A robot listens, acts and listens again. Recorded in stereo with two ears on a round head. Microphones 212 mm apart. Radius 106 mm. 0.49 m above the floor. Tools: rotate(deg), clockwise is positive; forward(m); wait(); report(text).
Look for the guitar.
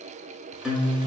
rotate(30)
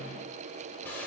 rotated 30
wait()
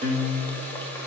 rotate(150)
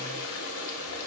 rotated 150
wait()
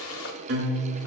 rotate(50)
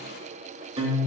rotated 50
rotate(25)
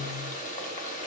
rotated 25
rotate(10)
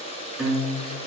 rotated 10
report("Facing the guitar.")